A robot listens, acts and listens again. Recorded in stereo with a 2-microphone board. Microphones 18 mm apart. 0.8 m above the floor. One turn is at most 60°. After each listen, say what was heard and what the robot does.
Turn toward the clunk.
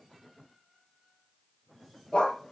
Keep listening.
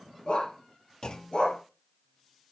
The clunk: about 50° left or 130° left. Turn 50° left.
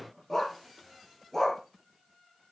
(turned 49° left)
Keep listening.
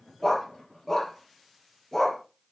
I heard a clunk, but can't make it out now. It was about straight ahead or 80° left.